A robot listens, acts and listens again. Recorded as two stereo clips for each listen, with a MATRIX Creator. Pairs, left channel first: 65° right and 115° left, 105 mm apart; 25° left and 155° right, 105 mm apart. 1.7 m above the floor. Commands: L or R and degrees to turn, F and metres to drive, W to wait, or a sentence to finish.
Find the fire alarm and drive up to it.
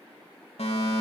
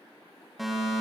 R70
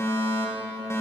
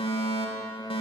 F1.0
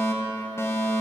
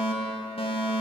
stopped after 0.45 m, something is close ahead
Something is in my way. I am facing the fire alarm but have not reached it.